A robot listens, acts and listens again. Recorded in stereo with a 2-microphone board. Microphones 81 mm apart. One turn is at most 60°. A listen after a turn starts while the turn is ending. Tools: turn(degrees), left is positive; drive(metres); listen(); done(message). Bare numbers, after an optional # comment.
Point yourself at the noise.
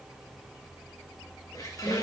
# The squeak: about 45° left or 135° left.
turn(45)
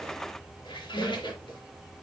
# So it is at 90° left.
turn(60)
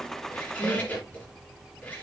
# The squeak is now 25° left.
turn(25)
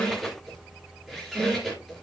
done("Found it: a squeak, straight ahead.")